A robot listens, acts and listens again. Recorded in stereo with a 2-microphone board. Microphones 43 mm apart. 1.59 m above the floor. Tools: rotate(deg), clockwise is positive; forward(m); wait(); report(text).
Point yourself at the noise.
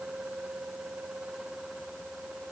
wait()
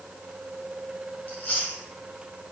rotate(-35)
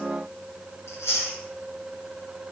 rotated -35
rotate(-110)
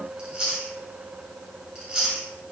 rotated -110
rotate(15)
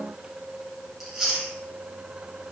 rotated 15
report("Found it: chewing, straight ahead, under 1 m away.")